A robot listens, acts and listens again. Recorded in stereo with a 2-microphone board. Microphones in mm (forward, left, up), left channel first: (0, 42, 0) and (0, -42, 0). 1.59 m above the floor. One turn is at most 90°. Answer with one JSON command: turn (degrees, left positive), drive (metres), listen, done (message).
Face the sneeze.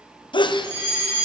{"turn": 70}
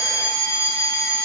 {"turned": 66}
{"listen": true}
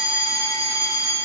{"done": "I heard a sneeze, but can't make it out now. It was about 5° left or 45° left."}